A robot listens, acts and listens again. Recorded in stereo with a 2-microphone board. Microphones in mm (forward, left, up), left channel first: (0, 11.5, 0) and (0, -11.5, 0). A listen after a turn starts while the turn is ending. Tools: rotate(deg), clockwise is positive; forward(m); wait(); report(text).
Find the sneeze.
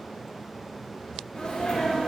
rotate(-45)
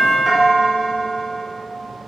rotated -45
wait()
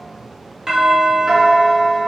report("I heard a sneeze, but can't make it out now. It was about straight ahead or 90° left.")